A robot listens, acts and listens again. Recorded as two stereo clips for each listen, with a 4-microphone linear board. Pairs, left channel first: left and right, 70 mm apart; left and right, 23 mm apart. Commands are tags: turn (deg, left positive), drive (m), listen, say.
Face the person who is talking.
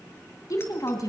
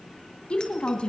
<turn deg="55"/>
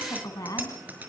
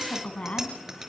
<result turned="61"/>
<turn deg="65"/>
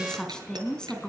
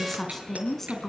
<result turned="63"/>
<turn deg="10"/>
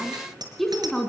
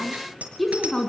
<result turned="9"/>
<say>Facing the woman speaking.</say>